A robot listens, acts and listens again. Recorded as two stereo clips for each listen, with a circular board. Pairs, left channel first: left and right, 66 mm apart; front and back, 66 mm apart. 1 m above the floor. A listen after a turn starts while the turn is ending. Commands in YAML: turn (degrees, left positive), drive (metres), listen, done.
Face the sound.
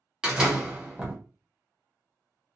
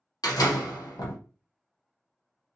turn: -10
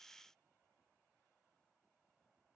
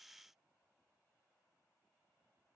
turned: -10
done: "Facing where the door slam came from. I can't hear it now."